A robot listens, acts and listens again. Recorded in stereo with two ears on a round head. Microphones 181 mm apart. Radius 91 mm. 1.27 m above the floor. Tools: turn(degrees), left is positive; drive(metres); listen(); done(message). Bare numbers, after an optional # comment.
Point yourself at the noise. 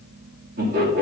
# The laughter: about 50° right or 130° right.
turn(-50)
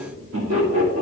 # So it is at 70° right.
turn(-70)
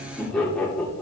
done("Found it: laughter, straight ahead.")